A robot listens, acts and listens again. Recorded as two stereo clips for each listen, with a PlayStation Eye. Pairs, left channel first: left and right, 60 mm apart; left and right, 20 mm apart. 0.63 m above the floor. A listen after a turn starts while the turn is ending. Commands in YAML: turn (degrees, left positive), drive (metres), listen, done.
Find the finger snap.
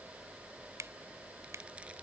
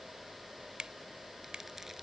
turn: -65
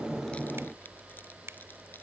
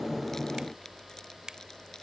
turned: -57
turn: -55
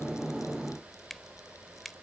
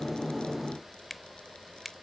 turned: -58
done: "Found it: a finger snap, straight ahead."